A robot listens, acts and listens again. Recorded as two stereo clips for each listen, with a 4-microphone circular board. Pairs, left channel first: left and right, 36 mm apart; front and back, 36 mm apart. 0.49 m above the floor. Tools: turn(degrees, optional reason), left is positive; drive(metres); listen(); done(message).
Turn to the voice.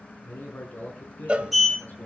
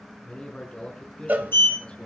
turn(degrees=60, reason="The man speaking: 60° left.")
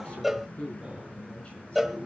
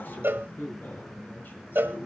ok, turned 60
turn(degrees=30, reason="The man speaking is now 30° left.")
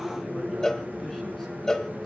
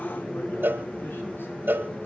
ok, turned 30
listen()
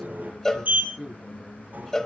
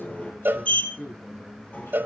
turn(degrees=10, reason="The man speaking is now 10° left.")
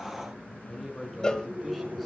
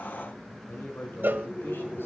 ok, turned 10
done("Facing the man speaking.")